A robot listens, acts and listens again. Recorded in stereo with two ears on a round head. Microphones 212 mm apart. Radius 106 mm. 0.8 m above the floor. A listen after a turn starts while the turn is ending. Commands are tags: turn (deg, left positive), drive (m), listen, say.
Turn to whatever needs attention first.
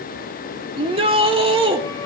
<turn deg="-25"/>
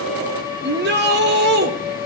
<turn deg="-130"/>
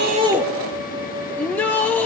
<say>Found it: a shout, straight ahead.</say>